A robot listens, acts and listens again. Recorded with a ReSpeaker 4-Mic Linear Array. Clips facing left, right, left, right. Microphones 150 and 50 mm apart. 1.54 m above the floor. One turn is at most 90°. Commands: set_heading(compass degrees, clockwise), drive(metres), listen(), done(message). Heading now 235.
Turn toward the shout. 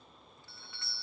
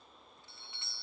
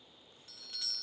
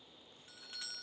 listen()
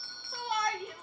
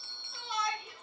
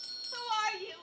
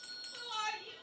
set_heading(175)
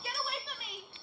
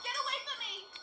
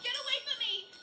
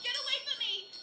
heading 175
done("Facing the shout, 2 to 4 m away.")